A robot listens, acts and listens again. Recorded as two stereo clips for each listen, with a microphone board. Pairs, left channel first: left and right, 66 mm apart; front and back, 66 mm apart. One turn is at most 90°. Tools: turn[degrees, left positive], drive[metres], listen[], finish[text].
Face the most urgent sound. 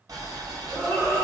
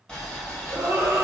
Thought: The scream: 130° right.
Action: turn[-90]
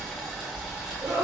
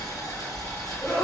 Thought: The scream is now 60° right.
Action: turn[-60]
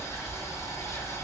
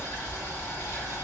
Action: listen[]
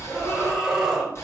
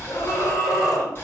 Action: finish[Facing the scream, 1 to 2 m away.]